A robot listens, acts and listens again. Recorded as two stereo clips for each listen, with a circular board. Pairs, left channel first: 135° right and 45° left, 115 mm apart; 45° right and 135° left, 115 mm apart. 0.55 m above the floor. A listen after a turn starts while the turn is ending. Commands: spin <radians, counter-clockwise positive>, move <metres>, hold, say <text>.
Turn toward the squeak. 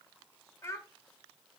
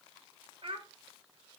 hold
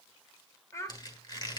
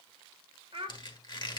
spin -1.57
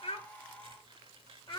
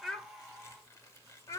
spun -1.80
spin 0.26
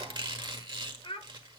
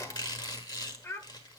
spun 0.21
say Found it: a squeak, straight ahead.